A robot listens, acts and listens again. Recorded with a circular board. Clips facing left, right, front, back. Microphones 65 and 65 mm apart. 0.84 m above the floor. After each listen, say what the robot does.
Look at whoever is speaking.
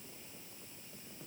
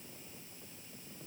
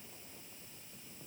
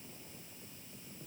Keep listening.
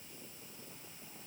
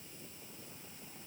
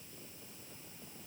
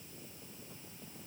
Keep listening.
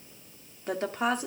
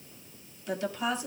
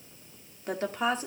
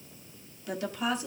Turn 50° left.
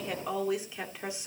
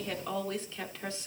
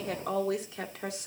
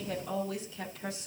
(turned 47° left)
Turn 15° left.
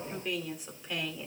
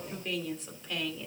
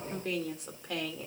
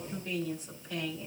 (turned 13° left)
Turn 10° left.
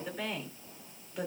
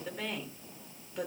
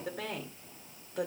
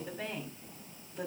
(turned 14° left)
Facing the woman speaking, 2 to 4 m away.